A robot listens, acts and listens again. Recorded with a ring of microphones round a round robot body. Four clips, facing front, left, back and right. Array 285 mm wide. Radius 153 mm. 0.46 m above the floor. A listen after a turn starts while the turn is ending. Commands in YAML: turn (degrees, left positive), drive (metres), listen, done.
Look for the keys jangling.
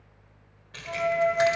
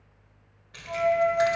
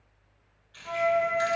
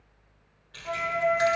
done: "Found it: keys jangling, straight ahead, 1 to 2 m away."